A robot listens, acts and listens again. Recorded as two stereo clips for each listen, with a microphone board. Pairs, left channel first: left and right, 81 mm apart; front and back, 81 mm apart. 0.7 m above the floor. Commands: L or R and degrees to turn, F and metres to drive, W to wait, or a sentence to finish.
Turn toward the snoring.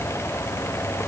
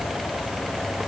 W
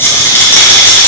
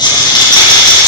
W
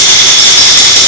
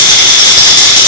I can't make out snoring to turn to.